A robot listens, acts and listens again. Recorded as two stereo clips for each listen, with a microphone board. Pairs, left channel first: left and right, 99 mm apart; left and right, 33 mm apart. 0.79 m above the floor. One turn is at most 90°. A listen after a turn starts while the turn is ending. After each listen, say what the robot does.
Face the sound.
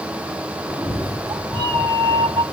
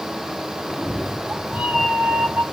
Turn 55° right.
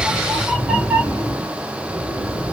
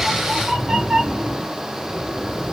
Turn 30° right.
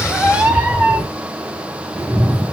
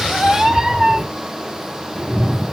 Turn 15° right.
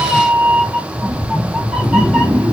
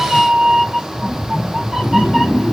Facing the cat meowing.